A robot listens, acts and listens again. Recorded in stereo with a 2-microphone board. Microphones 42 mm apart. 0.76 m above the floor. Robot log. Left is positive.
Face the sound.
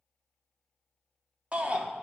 note: The shout: about 30° right or 150° right.
cmd yaw -30
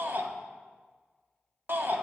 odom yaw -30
note: So it is at 120° right.
cmd yaw -120
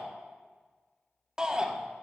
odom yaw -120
note: The shout is now 20° right.
cmd yaw -20
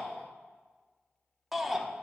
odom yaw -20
end: Facing the shout, 1 to 2 m away.